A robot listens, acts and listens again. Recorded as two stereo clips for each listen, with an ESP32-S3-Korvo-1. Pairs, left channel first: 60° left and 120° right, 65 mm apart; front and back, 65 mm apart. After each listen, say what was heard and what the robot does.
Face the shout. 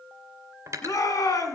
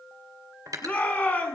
The shout: 65° left. Turn 65° left.
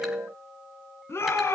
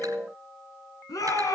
The shout is now 15° left. Turn 15° left.
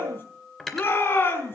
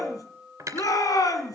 Found it: a shout, straight ahead.